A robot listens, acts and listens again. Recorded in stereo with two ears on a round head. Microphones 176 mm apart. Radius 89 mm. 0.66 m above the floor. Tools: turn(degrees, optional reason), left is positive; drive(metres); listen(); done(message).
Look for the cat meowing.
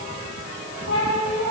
turn(degrees=70, reason="The cat meowing: about 70° left or 110° left.")
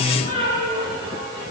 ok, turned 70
turn(degrees=40, reason="So it is at 40° left.")
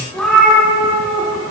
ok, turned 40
done("Facing the cat meowing.")